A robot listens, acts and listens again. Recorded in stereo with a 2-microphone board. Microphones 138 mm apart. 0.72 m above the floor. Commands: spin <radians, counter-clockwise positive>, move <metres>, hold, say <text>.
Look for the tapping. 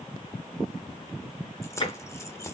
spin 0.61
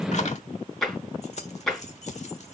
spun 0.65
say Found it: tapping, straight ahead.